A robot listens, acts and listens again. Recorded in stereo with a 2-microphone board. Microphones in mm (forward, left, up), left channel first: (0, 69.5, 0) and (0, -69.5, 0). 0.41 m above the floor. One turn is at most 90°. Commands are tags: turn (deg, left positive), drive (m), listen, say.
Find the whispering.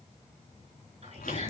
<turn deg="-50"/>
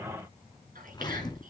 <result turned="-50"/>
<turn deg="-80"/>
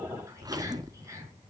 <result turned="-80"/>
<turn deg="-20"/>
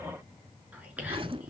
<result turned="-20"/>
<turn deg="-10"/>
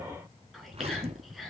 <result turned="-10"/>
<say>Found it: whispering, straight ahead.</say>